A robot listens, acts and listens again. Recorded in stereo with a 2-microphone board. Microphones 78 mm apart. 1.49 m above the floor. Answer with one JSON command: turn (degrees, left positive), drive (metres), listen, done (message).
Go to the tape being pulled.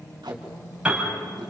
{"turn": -90}
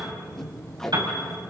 {"turn": 10}
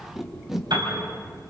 {"drive": 1.0}
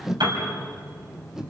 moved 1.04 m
{"drive": 1.0}
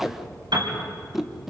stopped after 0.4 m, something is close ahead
{"done": "I am next to the tape being pulled."}